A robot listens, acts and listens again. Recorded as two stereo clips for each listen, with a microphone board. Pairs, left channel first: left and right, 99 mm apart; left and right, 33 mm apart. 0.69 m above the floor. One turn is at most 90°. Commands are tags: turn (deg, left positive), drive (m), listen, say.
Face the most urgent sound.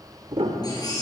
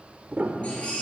<turn deg="40"/>
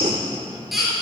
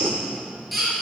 <say>Found it: a baby crying, straight ahead, over 4 m away.</say>